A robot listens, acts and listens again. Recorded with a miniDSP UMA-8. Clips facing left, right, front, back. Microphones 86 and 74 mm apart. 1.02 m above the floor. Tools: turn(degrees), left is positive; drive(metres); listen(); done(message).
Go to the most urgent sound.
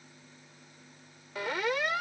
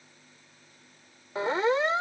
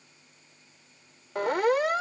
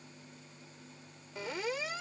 turn(degrees=-30)
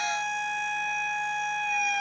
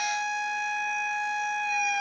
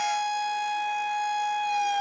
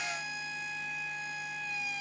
drive(metres=1.0)
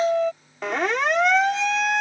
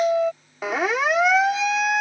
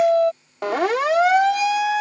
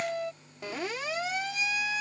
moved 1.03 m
drive(metres=1.0)
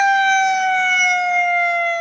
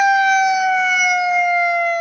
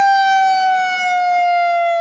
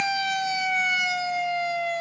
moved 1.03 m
drive(metres=1.0)
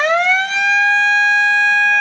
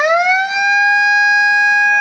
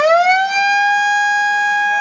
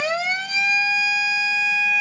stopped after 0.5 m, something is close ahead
turn(degrees=-15)
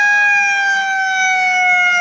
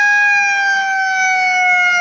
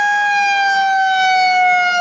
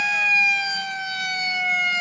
done("Arrived at the siren, straight ahead.")